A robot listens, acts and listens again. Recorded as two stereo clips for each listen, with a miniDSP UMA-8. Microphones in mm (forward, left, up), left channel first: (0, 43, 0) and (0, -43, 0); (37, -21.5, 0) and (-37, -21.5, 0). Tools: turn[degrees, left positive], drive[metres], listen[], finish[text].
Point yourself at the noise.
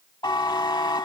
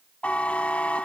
Thought: The buzzer: 70° left.
Action: turn[70]
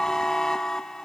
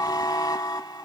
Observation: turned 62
Action: finish[Found it: a buzzer, straight ahead, under 1 m away.]